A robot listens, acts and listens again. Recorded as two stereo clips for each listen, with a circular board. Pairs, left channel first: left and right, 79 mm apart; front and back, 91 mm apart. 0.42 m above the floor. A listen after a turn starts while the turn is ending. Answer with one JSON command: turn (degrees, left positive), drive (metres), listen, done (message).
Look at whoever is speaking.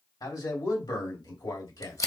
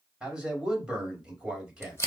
{"turn": 100}
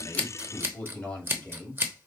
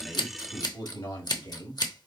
{"turn": 15}
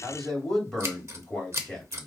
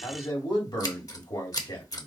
{"done": "Facing the man speaking, 2 to 4 m away."}